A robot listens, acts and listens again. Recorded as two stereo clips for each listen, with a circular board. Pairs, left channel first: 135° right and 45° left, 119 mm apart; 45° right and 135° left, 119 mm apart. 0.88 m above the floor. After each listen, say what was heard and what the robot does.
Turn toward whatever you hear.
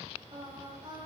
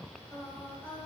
The singing: 20° left. Turn 20° left.
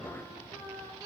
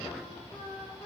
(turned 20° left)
The singing is now 10° right. Turn 10° right.
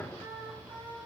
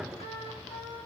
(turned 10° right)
The singing is now 25° right. Turn 25° right.
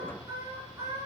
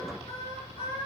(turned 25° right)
The singing is now 15° right. Turn 15° right.
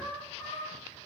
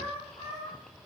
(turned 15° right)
The singing is now 15° right. Turn 15° right.
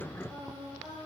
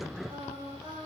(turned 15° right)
The singing is now 15° right. Turn 15° right.
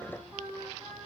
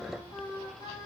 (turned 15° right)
Found it: singing, straight ahead.